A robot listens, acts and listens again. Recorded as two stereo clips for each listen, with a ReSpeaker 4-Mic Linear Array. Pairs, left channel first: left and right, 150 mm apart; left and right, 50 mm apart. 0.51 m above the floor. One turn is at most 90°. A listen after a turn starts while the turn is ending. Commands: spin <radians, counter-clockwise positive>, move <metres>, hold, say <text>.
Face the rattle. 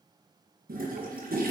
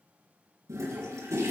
hold
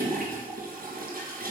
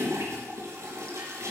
hold
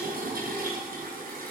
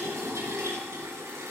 say I can't make out a rattle, only a toilet flushing.